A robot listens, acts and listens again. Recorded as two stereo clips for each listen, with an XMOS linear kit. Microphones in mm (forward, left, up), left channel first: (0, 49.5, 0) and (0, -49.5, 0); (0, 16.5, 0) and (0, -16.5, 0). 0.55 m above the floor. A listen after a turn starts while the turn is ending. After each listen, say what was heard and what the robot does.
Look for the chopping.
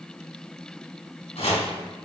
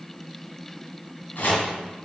Turn 90° left.
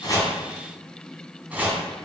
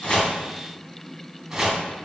So it is at 15° right. Turn 15° right.
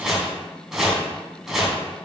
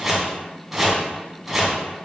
Facing the chopping, 2 to 4 m away.